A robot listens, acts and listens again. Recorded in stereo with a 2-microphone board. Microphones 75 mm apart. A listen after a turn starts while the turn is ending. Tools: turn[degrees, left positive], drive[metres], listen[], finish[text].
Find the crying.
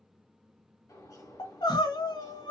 Action: turn[90]
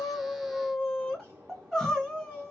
Action: finish[Found it: crying, straight ahead, 1 to 2 m away.]